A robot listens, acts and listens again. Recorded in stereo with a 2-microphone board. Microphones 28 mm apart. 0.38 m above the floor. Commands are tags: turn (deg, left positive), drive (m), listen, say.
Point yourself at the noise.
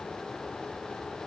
<listen/>
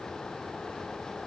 <listen/>
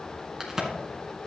<turn deg="-15"/>
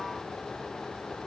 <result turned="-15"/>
<listen/>
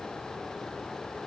<say>I heard a crack, but can't make it out now. It was about straight ahead or 150° right.</say>